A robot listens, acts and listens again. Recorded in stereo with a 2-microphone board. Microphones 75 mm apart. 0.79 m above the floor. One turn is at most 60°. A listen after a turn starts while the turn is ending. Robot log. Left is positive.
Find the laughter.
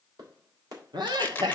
note: The laughter: about 75° right or 105° right.
cmd yaw -60
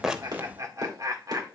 note: So it is at 50° right.
cmd yaw -50
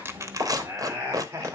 note: The laughter is now 35° right.
cmd yaw -35
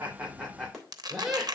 end: Found it: laughter, straight ahead.